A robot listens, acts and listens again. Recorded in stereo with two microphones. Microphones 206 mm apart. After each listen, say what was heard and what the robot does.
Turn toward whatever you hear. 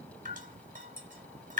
The dripping: about 40° right or 140° right. Turn 40° right.
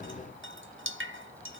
So it is at 100° right. Turn 100° right.
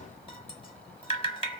The dripping is now 30° left. Turn 30° left.
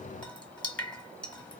Found it: dripping, straight ahead.